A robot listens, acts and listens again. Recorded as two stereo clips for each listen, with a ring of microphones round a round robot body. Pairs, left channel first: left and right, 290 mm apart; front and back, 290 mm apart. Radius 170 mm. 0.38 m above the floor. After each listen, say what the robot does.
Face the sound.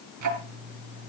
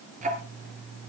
Turn 110° right.
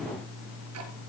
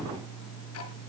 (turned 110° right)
Turn 45° right.
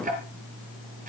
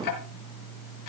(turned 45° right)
Turn 25° right.
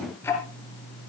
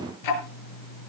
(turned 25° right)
Found it: ticking, straight ahead, over 4 m away.